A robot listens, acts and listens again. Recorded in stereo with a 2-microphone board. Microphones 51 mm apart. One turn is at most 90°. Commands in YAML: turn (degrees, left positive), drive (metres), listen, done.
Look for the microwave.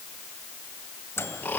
turn: 60
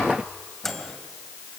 done: "Found it: a microwave, straight ahead, 2 to 4 m away."